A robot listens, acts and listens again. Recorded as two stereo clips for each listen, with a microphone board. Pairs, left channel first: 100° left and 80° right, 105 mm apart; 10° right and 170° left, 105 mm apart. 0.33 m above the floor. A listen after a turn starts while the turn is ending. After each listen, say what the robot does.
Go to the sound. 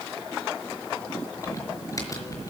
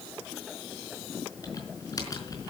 Turn 40° left.
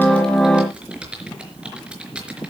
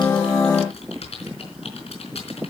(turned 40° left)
Drive 1.0 m forward.
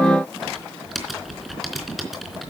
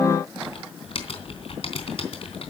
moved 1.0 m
Turn 10° left.
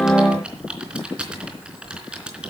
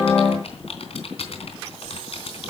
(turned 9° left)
Drive 1.0 m forward.
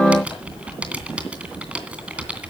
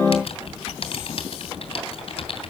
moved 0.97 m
Drive 1.0 m forward.
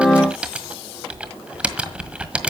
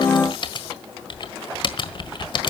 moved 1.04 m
Drive 1.0 m forward.
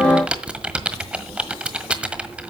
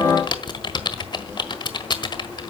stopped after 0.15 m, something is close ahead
Arrived at the typing on a keyboard, straight ahead.